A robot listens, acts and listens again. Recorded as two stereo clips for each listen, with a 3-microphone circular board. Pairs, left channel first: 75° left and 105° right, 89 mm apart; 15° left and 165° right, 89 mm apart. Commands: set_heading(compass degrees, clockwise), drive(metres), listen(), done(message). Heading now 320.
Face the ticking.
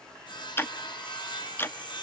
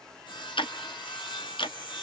set_heading(310)
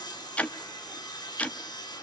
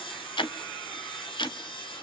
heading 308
done("Facing the ticking, under 1 m away.")